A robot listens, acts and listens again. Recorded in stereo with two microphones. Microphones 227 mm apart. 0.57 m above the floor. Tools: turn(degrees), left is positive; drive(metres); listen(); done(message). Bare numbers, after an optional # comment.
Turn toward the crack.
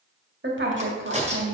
# The crack: about 35° right or 145° right.
turn(-35)
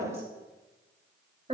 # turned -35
listen()
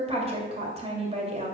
done("I heard a crack, but can't make it out now. It was about straight ahead or 110° right.")